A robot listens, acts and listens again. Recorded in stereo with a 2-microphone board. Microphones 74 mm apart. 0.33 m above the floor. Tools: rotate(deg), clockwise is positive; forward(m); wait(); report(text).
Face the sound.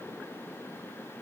wait()
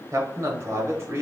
rotate(35)
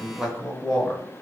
rotate(-10)
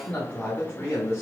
rotate(-35)
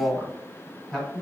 rotate(-10)
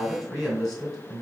report("Found it: a man speaking, straight ahead, 2 to 4 m away.")